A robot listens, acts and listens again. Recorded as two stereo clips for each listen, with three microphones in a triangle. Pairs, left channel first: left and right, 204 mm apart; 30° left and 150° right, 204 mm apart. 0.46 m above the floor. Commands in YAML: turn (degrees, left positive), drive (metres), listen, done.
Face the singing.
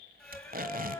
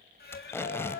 turn: 15
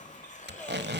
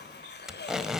listen: true
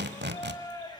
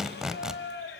turn: 20
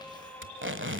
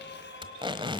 listen: true
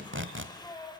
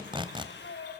turn: 20
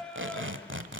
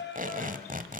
done: "Facing the singing."